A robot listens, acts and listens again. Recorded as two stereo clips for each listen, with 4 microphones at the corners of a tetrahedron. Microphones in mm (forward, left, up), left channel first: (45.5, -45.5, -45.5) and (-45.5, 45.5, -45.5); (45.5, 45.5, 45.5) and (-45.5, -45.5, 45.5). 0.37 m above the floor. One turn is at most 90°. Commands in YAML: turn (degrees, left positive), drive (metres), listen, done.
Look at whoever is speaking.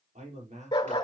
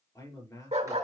turn: 90
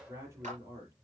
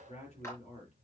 turn: 70
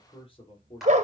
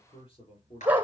done: "Facing the man speaking, over 4 m away."